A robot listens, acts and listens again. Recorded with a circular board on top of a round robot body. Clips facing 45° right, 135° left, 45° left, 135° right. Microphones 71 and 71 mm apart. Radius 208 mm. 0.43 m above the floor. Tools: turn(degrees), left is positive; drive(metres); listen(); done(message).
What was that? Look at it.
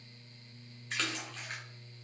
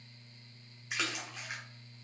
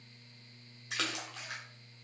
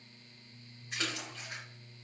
turn(degrees=55)
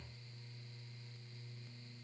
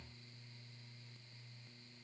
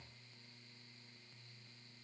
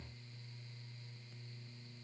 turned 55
done("I heard a splash from this way, but can't make it out now.")